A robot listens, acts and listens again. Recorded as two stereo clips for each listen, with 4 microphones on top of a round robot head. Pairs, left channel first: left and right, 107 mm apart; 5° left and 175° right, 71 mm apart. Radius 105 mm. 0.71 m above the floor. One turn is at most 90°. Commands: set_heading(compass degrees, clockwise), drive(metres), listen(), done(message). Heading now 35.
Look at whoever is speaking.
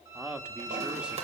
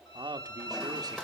set_heading(125)
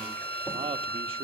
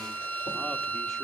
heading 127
set_heading(207)
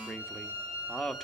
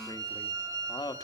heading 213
done("Found it: a man speaking, straight ahead, 1 to 2 m away.")